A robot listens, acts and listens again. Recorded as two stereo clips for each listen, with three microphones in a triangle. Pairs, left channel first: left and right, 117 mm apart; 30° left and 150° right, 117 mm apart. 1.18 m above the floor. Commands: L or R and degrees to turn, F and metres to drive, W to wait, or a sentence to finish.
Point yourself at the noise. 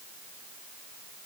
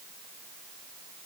W
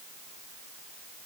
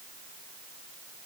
W
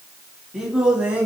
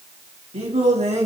R170
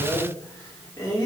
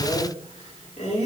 L30
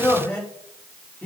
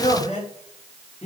L10
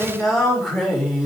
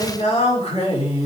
Found it: singing, straight ahead, 2 to 4 m away.